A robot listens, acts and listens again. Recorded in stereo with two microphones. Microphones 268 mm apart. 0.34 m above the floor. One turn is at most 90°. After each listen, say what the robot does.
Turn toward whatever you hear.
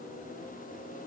Keep listening.
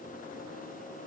Keep listening.
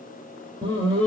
Turn 20° right.
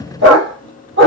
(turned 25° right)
Turn 90° right.
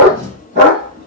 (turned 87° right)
Turn 40° right.
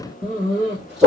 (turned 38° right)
Found it: a dog barking, straight ahead.